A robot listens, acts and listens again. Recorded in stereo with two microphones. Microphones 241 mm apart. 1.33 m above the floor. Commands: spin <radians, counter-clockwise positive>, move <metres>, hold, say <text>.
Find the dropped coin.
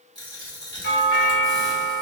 spin 0.26
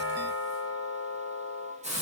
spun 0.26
hold
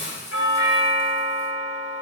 say I heard a dropped coin, but can't make it out now. It was about straight ahead or 150° left.